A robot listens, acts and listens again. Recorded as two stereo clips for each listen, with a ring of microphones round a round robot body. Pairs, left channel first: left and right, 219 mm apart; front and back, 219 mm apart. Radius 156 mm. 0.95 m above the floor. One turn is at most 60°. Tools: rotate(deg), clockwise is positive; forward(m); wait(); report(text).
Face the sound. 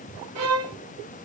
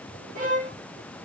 rotate(60)
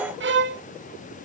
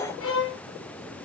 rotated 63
rotate(50)
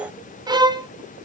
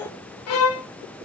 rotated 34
rotate(15)
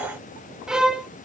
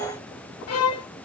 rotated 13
report("Found it: a violin, straight ahead, under 1 m away.")